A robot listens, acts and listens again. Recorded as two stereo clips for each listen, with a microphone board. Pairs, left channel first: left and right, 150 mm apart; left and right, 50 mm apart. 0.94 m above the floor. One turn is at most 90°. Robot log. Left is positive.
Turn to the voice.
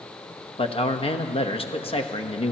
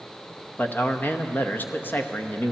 note: The man speaking: about 40° left or 140° left.
cmd yaw +40
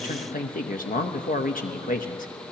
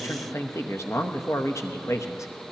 note: So it is at 95° left.
cmd yaw +90
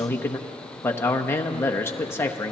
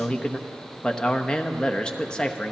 note: The man speaking is now 15° left.
cmd yaw +15
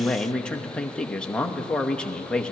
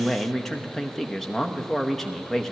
end: Found it: a man speaking, straight ahead, under 1 m away.